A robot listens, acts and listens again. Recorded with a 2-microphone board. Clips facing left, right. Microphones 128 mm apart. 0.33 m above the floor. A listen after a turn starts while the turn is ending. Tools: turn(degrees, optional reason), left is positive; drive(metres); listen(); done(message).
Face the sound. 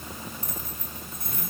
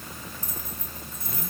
turn(degrees=60, reason="The keys jangling: about 60° left or 120° left.")
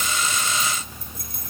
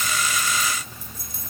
turn(degrees=60, reason="So it is at 60° left.")
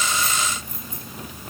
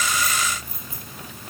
turn(degrees=-10, reason="The keys jangling is now 10° right.")
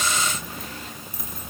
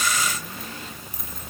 done("Found it: keys jangling, straight ahead.")